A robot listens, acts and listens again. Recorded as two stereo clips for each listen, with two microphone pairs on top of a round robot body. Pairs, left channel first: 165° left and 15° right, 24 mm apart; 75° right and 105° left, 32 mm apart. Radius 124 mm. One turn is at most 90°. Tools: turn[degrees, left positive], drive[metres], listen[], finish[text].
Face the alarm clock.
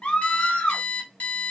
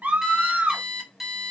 Thought: The alarm clock: 165° right.
Action: turn[-90]
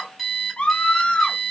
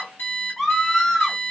Thought: The alarm clock is now 95° right.
Action: turn[-90]
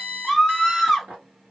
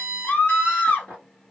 Thought: The alarm clock is now 45° right.
Action: turn[-45]
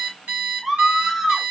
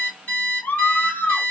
Thought: The alarm clock is now 30° right.
Action: turn[-30]
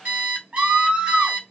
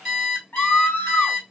Action: finish[Facing the alarm clock.]